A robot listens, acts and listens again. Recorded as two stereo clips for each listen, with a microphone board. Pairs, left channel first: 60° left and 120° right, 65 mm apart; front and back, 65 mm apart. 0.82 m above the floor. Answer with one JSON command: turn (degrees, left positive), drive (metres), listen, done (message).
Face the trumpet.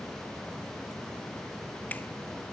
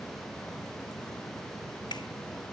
{"listen": true}
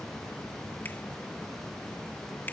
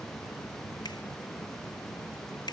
{"listen": true}
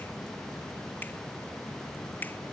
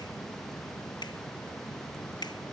{"done": "I can't make out a trumpet."}